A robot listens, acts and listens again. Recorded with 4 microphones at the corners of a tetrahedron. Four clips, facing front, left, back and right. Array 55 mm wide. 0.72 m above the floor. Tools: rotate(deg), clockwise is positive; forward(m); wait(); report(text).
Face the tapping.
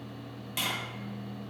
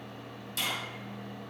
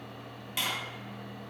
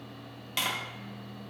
rotate(90)
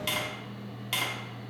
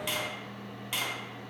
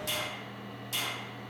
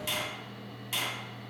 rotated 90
rotate(-20)
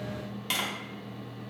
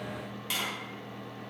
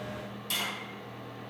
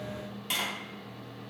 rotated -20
report("Facing the tapping.")